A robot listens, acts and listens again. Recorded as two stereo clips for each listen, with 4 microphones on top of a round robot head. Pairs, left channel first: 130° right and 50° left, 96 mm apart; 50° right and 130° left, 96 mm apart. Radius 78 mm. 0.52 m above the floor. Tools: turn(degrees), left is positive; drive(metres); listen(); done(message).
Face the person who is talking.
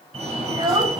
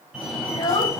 done("Found it: a child speaking, straight ahead, 2 to 4 m away.")